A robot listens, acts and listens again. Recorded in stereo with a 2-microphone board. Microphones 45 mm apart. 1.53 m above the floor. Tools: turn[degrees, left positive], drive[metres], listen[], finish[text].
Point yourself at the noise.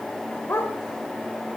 Thought: The dog barking: about 60° left or 120° left.
Action: turn[60]
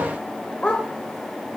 Thought: So it is at 25° left.
Action: turn[25]
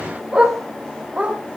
Thought: The dog barking is now 25° right.
Action: turn[-25]
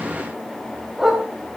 Action: finish[Found it: a dog barking, straight ahead, over 4 m away.]